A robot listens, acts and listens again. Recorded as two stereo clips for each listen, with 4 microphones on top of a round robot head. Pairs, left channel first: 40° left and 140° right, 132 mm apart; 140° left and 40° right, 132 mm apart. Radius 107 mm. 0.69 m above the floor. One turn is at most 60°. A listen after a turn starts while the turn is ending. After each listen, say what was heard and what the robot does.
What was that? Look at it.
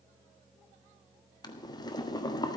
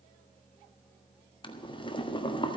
The boiling: 95° left. Turn 60° left.
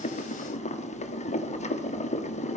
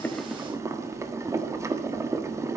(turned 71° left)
The boiling is now 25° left. Turn 25° left.
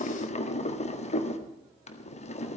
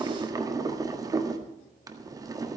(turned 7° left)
The boiling is now 20° left. Turn 20° left.
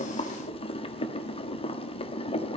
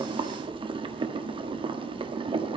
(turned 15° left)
Facing the boiling, 1 to 2 m away.